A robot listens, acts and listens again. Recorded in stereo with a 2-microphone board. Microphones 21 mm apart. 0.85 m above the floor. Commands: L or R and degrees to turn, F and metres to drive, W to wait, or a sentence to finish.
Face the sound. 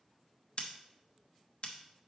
L50
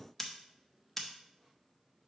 L10
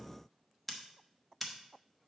Found it: scissors, straight ahead.